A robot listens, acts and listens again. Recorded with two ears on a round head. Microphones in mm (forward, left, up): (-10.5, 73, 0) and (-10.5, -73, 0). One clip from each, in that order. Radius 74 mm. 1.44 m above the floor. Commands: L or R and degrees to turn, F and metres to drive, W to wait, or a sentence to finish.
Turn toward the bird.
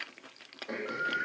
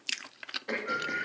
L45
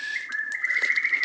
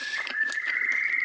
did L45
L90
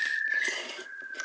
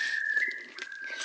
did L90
Found it: a bird, straight ahead.